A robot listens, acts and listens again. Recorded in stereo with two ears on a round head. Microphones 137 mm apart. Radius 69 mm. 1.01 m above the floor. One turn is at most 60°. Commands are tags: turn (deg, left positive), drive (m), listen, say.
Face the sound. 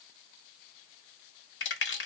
<turn deg="60"/>
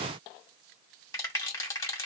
<turn deg="20"/>
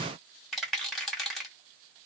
<say>Found it: a rattle, straight ahead, 2 to 4 m away.</say>